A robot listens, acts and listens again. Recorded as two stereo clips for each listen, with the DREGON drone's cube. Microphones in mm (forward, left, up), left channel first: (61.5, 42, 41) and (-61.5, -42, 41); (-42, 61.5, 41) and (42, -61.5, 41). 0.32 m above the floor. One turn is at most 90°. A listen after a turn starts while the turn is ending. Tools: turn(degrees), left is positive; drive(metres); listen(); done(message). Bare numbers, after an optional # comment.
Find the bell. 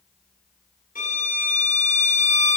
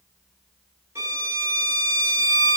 listen()
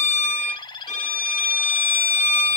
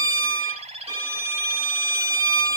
listen()
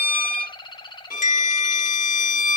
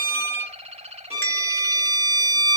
# The bell: 50° left.
turn(50)
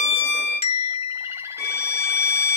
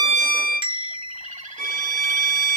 done("Found it: a bell, straight ahead, 2 to 4 m away.")